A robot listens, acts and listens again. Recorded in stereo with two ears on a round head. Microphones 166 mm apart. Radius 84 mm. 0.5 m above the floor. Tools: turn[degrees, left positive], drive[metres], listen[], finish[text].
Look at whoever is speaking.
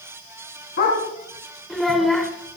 Action: turn[30]
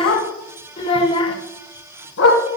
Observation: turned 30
Thought: So it is at 150° left.
Action: turn[150]
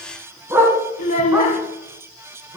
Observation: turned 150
Thought: The child speaking is now 45° left.
Action: turn[45]
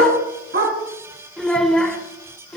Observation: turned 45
Action: finish[Found it: a child speaking, straight ahead.]